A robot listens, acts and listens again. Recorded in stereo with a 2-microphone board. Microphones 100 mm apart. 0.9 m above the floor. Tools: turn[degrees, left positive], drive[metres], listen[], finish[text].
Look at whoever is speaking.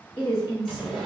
Thought: The woman speaking: about 50° left or 130° left.
Action: turn[50]
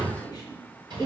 Thought: So it is at 30° left.
Action: turn[30]
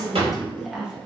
Thought: The woman speaking is now 10° right.
Action: turn[-10]
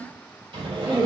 Thought: The woman speaking is now 20° right.
Action: turn[-20]
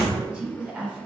Thought: The woman speaking is now 15° right.
Action: turn[-15]
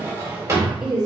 Thought: The woman speaking is now 10° right.
Action: turn[-10]
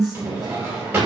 Action: finish[Found it: a woman speaking, straight ahead, 1 to 2 m away.]